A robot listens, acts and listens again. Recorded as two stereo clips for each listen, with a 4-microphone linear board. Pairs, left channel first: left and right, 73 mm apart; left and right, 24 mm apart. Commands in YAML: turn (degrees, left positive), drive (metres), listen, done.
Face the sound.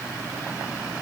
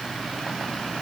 listen: true
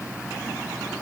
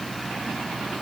listen: true
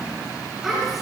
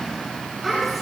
turn: -30
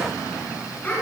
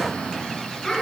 turn: 25
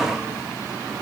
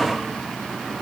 listen: true
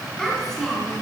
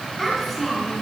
done: "Facing the child speaking, over 4 m away."